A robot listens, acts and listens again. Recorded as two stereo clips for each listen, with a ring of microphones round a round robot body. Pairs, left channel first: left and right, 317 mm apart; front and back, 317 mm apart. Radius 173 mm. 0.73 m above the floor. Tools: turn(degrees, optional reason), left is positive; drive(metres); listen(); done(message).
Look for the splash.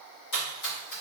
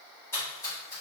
turn(degrees=80, reason="The splash: 80° left.")
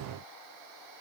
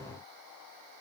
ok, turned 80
done("Facing where the splash came from. I can't hear it now.")